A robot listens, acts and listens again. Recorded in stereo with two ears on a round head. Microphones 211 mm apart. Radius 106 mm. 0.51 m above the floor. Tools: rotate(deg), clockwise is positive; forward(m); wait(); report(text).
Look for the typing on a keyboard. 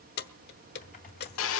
rotate(-35)
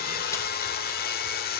wait()
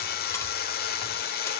wait()
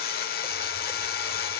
report("I heard typing on a keyboard, but can't make it out now. It was about straight ahead or 110° left.")